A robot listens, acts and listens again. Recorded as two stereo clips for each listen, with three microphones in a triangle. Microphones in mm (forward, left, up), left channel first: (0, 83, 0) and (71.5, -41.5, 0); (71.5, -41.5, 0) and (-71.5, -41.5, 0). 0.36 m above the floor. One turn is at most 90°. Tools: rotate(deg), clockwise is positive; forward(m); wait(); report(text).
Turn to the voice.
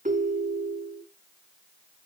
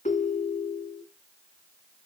wait()
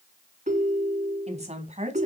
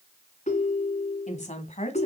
rotate(30)
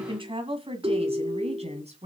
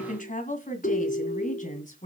rotate(25)
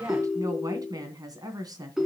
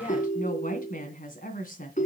report("Found it: a woman speaking, straight ahead, 2 to 4 m away.")